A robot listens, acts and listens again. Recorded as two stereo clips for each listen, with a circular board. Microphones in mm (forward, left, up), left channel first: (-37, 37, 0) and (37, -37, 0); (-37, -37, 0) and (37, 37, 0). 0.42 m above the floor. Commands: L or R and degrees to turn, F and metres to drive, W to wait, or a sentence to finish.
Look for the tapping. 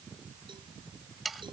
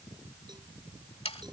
W
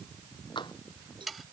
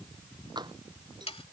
L90
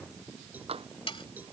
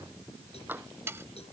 R25
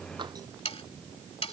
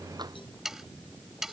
W
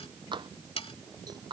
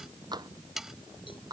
Facing the tapping.